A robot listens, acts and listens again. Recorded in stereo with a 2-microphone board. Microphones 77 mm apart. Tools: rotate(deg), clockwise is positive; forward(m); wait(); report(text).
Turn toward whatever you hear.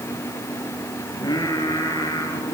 rotate(-60)
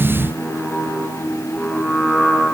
report("Facing the singing, 2 to 4 m away.")